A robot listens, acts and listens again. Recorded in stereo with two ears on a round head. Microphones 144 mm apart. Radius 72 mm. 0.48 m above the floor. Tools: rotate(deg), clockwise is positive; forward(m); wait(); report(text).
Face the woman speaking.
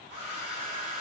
wait()
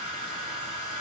wait()
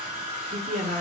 rotate(55)
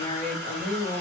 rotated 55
rotate(45)
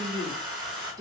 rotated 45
rotate(20)
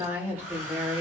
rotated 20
rotate(15)
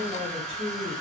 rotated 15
report("Found it: a woman speaking, straight ahead, 1 to 2 m away.")